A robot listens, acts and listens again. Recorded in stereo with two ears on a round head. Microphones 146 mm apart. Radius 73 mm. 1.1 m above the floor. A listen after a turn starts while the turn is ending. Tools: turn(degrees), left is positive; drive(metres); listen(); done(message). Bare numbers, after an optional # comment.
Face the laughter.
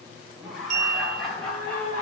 turn(30)
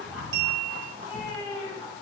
listen()
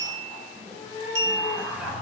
turn(-30)
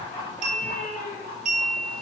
# So it is at 25° left.
turn(25)
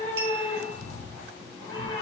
listen()
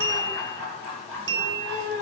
done("Found it: laughter, straight ahead.")